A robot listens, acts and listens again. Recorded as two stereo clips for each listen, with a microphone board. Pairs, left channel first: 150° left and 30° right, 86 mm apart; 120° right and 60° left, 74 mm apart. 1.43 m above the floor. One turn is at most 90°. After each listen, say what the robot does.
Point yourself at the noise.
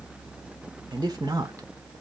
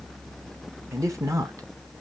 Turn 20° left.
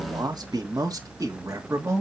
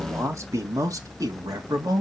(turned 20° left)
Turn 30° left.
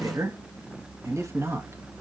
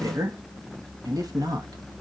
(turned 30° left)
Turn 30° left.
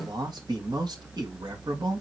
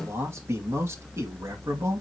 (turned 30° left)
Turn 10° left.
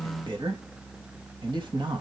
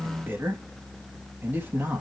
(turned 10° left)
Found it: a man speaking, straight ahead, 2 to 4 m away.